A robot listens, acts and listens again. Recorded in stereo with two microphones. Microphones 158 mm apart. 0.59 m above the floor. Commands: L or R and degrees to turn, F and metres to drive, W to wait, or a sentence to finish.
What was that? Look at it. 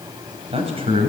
R40
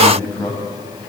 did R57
L10
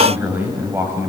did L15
R15
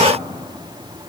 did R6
R10
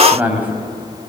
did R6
R10
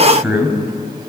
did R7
R10
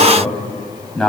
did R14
Found it: a man speaking, straight ahead.